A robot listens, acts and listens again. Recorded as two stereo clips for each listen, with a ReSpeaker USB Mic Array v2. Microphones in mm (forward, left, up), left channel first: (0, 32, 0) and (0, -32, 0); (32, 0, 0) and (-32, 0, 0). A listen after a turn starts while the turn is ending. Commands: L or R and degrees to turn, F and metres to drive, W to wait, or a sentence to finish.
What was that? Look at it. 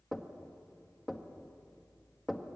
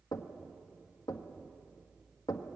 Facing the knocking.